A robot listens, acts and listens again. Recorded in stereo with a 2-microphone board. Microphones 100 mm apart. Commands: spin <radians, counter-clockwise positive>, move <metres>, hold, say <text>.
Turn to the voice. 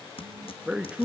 spin -0.52
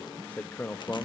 spin 0.26
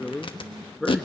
say Facing the man speaking.